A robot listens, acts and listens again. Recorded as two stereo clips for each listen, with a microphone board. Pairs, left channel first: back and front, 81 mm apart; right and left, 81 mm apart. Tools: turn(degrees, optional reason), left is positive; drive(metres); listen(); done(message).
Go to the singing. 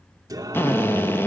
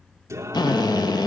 turn(degrees=40, reason="The singing: 40° left.")
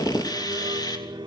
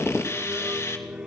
turn(degrees=15, reason="The singing is now 15° left.")
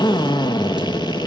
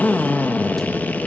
listen()
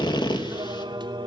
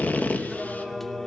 drive(metres=1.0)
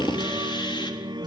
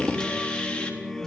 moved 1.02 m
drive(metres=1.0)
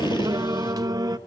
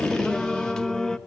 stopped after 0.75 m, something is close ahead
turn(degrees=-10, reason="The singing is now 10° right.")
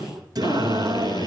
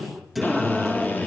done("I am next to the singing.")